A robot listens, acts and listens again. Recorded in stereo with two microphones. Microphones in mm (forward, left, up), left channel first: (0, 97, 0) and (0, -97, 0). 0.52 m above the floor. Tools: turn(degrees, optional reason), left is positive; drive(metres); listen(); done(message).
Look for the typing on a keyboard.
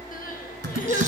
turn(degrees=-90)
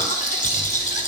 listen()
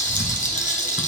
listen()
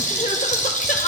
done("Facing where the typing on a keyboard came from. I can't hear it now.")